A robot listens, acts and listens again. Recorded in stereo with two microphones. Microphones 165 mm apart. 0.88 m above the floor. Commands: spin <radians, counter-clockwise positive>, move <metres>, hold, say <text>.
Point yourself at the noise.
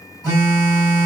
spin 0.35
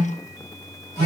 spin 2.36
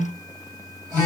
spin -0.35
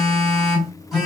say Found it: a phone buzzing, straight ahead, 1 to 2 m away.